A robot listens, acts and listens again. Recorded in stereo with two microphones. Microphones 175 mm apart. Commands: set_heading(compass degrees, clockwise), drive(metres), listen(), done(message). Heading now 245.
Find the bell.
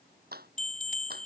set_heading(200)
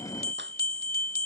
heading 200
set_heading(120)
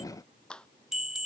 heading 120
done("Facing the bell.")